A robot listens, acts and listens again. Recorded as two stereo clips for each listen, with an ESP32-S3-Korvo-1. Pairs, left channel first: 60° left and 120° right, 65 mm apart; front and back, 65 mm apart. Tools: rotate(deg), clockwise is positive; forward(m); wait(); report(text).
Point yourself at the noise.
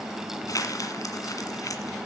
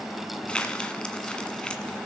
rotate(-75)
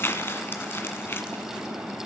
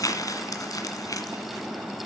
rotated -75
rotate(-10)
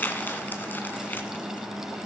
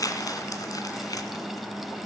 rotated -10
report("Found it: crumpling, straight ahead.")